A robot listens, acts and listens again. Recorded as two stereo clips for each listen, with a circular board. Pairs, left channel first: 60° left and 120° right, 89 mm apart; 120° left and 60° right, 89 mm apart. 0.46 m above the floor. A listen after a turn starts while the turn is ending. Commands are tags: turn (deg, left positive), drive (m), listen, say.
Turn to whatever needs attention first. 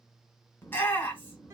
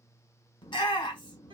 <turn deg="120"/>
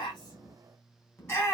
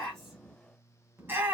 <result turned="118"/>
<say>Found it: a shout, straight ahead, 1 to 2 m away.</say>